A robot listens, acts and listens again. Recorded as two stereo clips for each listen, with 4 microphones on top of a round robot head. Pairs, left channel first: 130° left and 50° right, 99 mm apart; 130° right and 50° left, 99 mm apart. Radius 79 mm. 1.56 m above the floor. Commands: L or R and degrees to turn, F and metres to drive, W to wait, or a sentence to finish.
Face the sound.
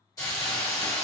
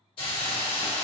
R170
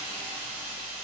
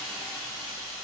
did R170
R45
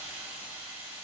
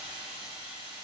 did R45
R10
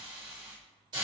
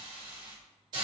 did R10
Facing the hiss, 1 to 2 m away.